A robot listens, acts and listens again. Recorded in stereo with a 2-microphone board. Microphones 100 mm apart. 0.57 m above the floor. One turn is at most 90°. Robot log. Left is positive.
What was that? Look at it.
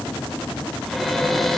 cmd yaw +30
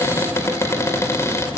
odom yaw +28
note: So it is at 150° left.
cmd yaw +90
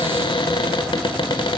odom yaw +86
note: The cupboard door is now 65° left.
cmd yaw +65
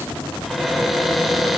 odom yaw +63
end: Facing the cupboard door, 1 to 2 m away.